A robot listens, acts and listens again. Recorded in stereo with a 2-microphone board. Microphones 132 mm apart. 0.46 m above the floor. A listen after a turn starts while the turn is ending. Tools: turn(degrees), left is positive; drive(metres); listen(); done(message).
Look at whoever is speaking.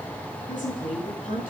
turn(degrees=90)
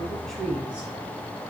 turn(degrees=-10)
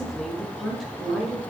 done("Found it: a woman speaking, straight ahead, over 4 m away.")